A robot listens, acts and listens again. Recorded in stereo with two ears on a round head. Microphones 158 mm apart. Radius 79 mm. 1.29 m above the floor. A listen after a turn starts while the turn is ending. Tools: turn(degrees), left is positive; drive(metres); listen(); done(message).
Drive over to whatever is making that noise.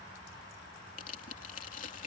turn(degrees=50)
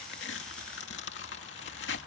turn(degrees=80)
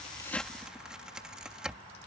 drive(metres=1.0)
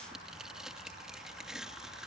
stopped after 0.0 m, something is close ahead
done("Blocked. The tearing paper is further on, straight ahead.")